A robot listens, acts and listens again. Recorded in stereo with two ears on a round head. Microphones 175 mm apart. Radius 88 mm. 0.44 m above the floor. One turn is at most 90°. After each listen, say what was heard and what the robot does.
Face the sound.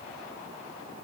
Keep listening.
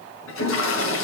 The toilet flushing: about 75° left or 105° left. Turn 75° left.
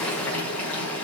So it is at 10° left. Turn 10° left.
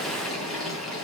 Facing the toilet flushing.